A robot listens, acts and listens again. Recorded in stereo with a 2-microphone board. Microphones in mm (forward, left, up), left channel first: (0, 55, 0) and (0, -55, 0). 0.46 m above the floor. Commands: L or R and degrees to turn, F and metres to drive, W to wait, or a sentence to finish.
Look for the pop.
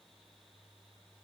W
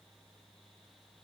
W
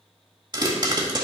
R40
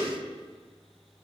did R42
W
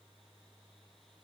I heard a pop, but can't make it out now. It was about straight ahead or 95° right.